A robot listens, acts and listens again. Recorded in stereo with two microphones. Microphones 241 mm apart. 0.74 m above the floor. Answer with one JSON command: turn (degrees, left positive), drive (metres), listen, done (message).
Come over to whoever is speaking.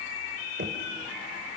{"listen": true}
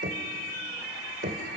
{"listen": true}
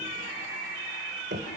{"done": "I can't make out anyone speaking to turn to."}